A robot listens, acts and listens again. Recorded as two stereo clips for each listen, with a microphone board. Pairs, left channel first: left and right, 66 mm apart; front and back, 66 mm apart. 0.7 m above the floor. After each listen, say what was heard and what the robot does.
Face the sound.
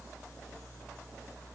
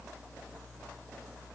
Keep listening.
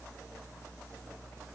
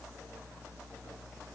Keep listening.
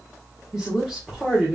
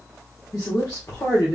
Facing the woman speaking, 1 to 2 m away.